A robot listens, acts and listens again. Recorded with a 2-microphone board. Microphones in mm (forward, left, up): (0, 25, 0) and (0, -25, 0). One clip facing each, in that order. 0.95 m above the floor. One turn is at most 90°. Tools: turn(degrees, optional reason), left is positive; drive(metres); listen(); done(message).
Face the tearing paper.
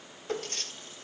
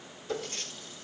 turn(degrees=70, reason="The tearing paper: about 70° left or 110° left.")
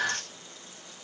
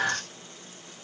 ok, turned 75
listen()
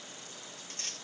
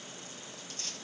turn(degrees=35, reason="So it is at 35° left.")
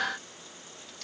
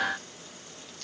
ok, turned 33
listen()
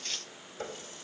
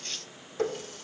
done("Facing the tearing paper.")